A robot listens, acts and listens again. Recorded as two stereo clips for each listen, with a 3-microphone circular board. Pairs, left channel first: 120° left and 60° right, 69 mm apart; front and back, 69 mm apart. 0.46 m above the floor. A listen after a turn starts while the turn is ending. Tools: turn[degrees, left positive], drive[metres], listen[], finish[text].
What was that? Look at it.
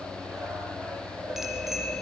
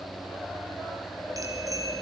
Thought: The bicycle bell: 145° right.
Action: turn[-145]
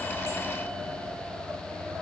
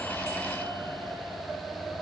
Action: listen[]
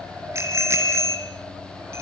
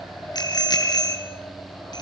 Thought: The bicycle bell is now 10° right.
Action: turn[-10]
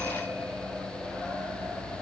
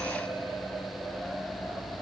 Action: listen[]
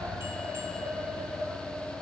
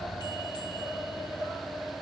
Action: listen[]
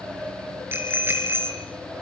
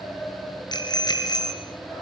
Action: finish[Found it: a bicycle bell, straight ahead.]